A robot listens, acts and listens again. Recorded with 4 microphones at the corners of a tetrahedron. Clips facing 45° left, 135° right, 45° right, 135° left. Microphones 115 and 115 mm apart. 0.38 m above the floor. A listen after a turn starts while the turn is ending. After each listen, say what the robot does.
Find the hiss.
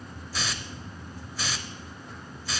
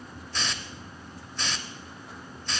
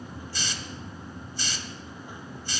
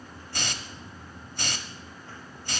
Turn 130° left.
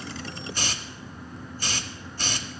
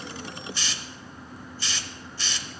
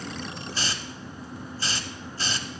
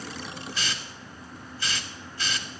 Found it: a hiss, straight ahead.